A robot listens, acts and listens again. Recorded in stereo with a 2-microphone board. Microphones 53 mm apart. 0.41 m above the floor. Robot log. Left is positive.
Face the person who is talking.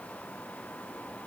cmd idle
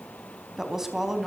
cmd yaw -30
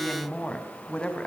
note: So it is at 20° left.
cmd yaw +20
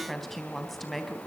end: Found it: a woman speaking, straight ahead, 2 to 4 m away.